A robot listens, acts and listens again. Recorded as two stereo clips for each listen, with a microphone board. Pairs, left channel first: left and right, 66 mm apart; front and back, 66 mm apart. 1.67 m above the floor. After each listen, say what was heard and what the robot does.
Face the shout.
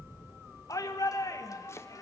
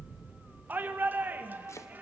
The shout: 120° left. Turn 120° left.
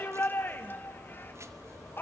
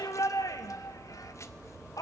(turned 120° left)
The shout is now 30° left. Turn 30° left.
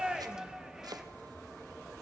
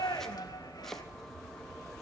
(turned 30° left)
The shout is now 10° right. Turn 10° right.
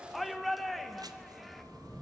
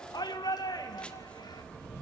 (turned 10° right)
Found it: a shout, straight ahead, 2 to 4 m away.